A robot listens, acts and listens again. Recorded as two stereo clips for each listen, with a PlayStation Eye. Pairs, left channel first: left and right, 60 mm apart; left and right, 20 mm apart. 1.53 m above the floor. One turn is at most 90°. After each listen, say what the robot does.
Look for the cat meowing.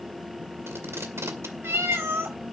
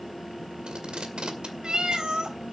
Turn 45° right.
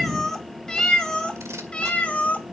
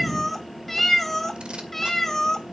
Turn 20° left.
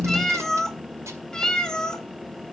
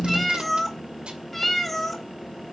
Turn 10° left.
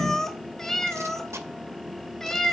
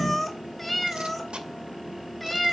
Found it: a cat meowing, straight ahead.